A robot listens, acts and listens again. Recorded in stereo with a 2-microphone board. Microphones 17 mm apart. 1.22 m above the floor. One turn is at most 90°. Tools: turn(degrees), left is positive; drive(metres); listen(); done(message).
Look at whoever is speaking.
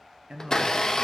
turn(degrees=-60)
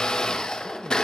listen()
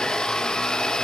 listen()
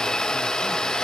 done("I heard a man speaking, but can't make it out now. It was about straight ahead or 60° right.")